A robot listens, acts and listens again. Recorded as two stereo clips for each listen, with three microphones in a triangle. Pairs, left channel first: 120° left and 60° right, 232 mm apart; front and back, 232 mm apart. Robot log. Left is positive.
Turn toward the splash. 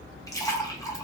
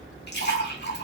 note: The splash: 40° left.
cmd yaw +40
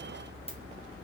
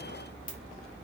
end: I heard a splash from this way, but can't make it out now.